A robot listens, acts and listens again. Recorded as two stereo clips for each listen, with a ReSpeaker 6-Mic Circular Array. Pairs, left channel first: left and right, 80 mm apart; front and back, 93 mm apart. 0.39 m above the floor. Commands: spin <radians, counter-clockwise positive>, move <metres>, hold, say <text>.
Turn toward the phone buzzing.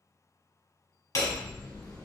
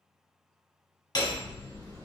hold
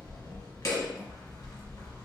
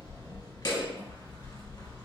hold
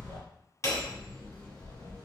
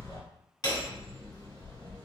say I can't make out a phone buzzing, only hammering.